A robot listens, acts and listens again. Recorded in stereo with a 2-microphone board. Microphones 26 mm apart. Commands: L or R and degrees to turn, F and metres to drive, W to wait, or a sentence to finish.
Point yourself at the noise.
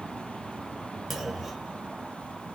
R30
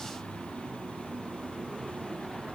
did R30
W
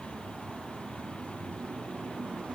I heard a clunk, but can't make it out now. It was about 20° left or 140° right.